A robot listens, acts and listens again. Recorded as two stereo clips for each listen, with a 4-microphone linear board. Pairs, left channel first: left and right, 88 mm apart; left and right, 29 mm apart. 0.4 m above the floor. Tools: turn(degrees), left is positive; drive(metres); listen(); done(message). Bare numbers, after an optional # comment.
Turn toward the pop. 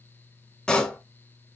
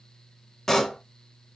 turn(30)
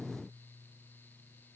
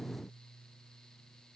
listen()
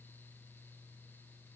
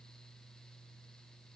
done("I heard a pop, but can't make it out now. It was about 20° right or 140° left.")